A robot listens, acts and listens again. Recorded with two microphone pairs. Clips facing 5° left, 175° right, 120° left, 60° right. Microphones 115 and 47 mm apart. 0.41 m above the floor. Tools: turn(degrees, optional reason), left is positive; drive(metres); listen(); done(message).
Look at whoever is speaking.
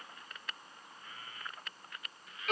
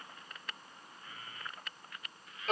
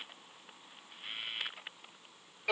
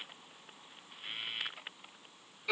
listen()
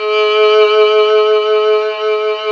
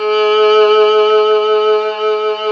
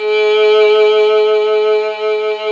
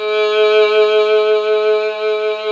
listen()
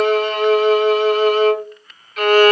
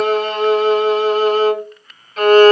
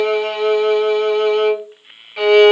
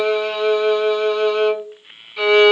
done("I can't make out anyone speaking, only a violin.")